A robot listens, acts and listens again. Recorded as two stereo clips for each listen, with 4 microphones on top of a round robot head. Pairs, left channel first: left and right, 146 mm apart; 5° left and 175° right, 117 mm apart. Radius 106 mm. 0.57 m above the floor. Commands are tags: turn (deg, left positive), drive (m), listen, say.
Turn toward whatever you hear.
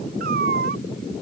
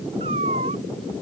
<turn deg="-125"/>
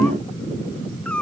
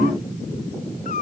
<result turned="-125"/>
<say>Found it: a cat meowing, straight ahead.</say>